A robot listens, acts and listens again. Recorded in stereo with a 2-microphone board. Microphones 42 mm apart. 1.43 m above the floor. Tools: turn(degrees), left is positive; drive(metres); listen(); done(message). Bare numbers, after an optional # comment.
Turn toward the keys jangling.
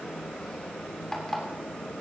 listen()
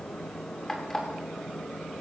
listen()
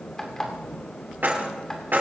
# The keys jangling: about 55° right or 125° right.
turn(-55)
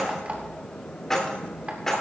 # So it is at 10° left.
turn(10)
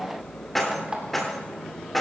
done("Found it: keys jangling, straight ahead.")